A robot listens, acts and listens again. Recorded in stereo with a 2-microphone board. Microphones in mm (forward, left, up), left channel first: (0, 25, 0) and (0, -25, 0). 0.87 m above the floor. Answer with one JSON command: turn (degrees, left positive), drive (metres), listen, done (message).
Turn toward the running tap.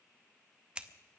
{"listen": true}
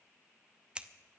{"listen": true}
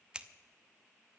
{"done": "I can't make out a running tap, only scissors."}